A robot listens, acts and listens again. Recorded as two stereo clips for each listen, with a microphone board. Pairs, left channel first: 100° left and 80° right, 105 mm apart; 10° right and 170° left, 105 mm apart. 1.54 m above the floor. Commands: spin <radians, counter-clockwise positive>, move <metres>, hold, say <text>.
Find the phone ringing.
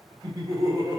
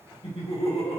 hold
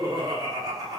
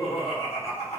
hold
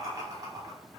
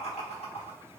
say I can't make out a phone ringing, only laughter.